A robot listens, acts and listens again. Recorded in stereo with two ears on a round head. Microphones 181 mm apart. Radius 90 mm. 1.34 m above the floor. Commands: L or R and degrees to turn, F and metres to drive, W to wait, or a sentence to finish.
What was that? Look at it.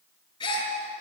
L20
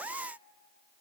W
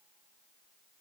I heard a gasp, but can't make it out now. It was about straight ahead or 140° left.